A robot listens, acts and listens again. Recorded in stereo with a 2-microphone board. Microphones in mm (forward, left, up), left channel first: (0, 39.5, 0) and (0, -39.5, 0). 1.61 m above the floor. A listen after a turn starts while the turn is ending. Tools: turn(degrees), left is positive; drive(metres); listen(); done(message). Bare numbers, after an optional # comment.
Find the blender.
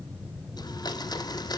# The blender: about 60° left or 120° left.
turn(60)
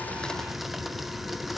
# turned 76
done("Facing the blender.")